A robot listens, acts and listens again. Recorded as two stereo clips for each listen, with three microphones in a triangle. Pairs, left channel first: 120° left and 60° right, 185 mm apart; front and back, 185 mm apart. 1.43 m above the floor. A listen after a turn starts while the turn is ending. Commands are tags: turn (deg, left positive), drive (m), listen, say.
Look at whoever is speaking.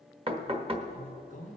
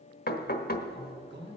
<turn deg="170"/>
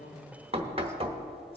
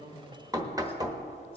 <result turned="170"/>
<listen/>
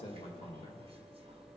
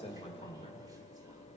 <turn deg="60"/>
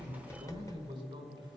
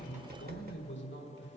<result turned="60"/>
<say>Found it: a man speaking, straight ahead.</say>